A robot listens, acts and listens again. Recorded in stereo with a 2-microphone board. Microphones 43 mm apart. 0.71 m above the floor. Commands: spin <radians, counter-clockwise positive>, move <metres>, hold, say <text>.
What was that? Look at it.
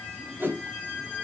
spin -0.96
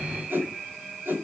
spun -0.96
spin -1.22
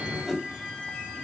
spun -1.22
spin -0.17
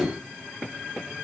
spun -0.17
say Found it: a whoosh, straight ahead, 2 to 4 m away.